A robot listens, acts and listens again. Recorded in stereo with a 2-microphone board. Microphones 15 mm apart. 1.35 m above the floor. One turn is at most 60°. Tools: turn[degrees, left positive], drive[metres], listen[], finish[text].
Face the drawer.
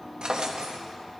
Thought: The drawer: about 70° right or 110° right.
Action: turn[-60]
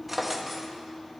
Thought: So it is at 15° right.
Action: turn[-15]
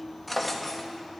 Action: finish[Facing the drawer.]